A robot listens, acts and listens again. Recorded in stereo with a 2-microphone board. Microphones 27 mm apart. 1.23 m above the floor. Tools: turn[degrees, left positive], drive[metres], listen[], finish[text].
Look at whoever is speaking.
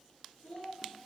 Thought: The child speaking: about 75° left or 105° left.
Action: turn[75]
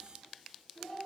Thought: So it is at 30° left.
Action: turn[30]
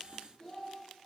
Thought: The child speaking is now 25° left.
Action: turn[25]
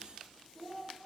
Thought: The child speaking is now 10° left.
Action: turn[10]
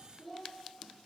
Action: finish[Facing the child speaking, 1 to 2 m away.]